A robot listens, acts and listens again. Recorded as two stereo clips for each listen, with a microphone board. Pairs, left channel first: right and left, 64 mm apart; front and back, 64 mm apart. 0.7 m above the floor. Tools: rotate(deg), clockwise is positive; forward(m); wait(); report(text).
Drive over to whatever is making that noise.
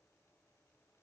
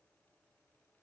wait()
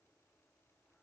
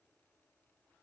wait()
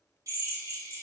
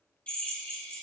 rotate(-65)
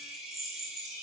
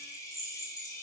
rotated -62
forward(1.0)
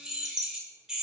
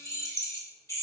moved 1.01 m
rotate(-10)
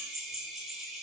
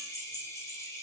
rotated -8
forward(1.0)
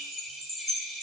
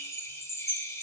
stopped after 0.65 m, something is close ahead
rotate(10)
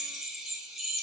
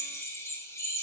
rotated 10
report("I am next to the drill.")